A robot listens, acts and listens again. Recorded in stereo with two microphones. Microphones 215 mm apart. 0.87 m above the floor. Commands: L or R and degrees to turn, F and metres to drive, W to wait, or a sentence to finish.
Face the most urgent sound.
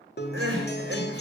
R65
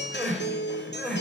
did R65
Facing the crying.